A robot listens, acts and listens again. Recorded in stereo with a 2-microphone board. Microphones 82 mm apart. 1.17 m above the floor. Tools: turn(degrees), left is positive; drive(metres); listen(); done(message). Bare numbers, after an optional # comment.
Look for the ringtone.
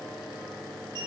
listen()
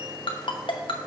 turn(90)
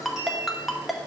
done("Facing the ringtone, under 1 m away.")